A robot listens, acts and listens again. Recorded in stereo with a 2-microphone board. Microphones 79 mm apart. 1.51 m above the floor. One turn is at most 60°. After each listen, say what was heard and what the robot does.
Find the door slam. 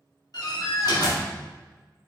The door slam: about 60° left or 120° left. Turn 60° left.
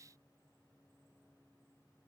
Keep listening.
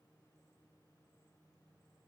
I heard a door slam, but can't make it out now. It was about straight ahead or 60° left.